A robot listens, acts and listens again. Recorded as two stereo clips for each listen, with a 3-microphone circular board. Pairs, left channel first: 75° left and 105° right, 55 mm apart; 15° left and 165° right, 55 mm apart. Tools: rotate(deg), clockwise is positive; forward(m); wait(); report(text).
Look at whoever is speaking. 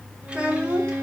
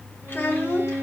rotate(35)
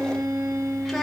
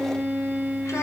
wait()
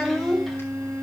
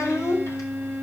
rotate(10)
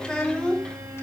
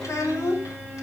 report("Facing the child speaking, 2 to 4 m away.")